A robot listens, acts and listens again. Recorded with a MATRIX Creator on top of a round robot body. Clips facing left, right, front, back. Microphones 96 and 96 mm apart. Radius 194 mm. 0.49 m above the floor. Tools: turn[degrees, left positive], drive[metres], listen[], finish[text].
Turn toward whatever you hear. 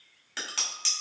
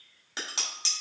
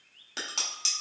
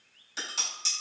Thought: The dishes clattering: 20° right.
Action: turn[-20]
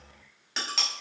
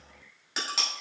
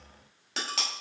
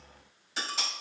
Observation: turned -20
Action: finish[Facing the dishes clattering, 1 to 2 m away.]